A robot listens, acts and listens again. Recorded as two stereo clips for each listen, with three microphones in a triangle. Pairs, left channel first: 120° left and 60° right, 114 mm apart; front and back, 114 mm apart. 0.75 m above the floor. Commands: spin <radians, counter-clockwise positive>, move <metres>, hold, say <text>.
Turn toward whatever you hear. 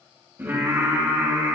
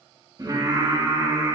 spin -2.18
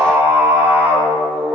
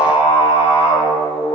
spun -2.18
spin 0.26
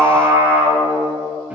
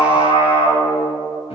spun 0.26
spin 0.26
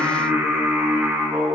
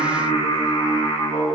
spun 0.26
spin 0.26
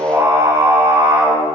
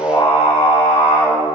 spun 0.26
say Found it: singing, straight ahead.